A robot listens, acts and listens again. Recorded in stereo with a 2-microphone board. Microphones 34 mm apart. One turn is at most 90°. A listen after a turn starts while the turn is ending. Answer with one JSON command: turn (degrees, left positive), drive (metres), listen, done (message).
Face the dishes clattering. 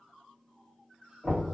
{"listen": true}
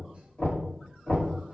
{"listen": true}
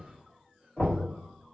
{"done": "I can't make out dishes clattering, only knocking."}